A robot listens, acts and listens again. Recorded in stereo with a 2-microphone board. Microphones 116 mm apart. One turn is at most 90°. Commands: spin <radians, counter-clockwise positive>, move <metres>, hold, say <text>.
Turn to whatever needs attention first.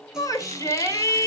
spin 0.52
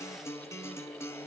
hold
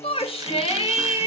spin 1.57
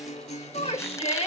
spin 1.13
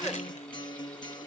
hold
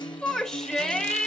say Found it: a shout, straight ahead.